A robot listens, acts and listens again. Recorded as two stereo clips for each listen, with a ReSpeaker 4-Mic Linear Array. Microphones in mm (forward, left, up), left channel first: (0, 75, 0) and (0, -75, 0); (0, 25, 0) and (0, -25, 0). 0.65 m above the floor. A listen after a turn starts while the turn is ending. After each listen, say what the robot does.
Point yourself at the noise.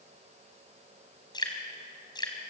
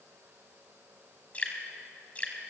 Turn 25° left.
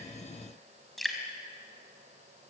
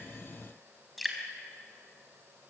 Found it: dripping, straight ahead.